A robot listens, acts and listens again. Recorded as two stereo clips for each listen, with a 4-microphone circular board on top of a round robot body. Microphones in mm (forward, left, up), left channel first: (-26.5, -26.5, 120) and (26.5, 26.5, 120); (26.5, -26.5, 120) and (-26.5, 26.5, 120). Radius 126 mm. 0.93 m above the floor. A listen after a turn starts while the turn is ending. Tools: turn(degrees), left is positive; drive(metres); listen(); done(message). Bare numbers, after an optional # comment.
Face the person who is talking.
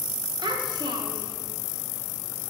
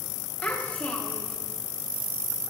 # The child speaking: 25° left.
turn(25)
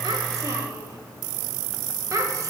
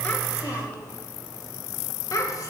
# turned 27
done("Found it: a child speaking, straight ahead.")